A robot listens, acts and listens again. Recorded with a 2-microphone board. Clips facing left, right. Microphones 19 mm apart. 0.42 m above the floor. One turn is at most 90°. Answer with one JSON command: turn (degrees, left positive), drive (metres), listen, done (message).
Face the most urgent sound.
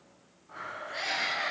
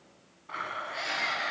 {"turn": 30}
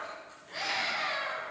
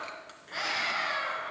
{"turn": -20}
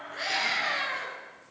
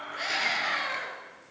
{"done": "Facing the scream."}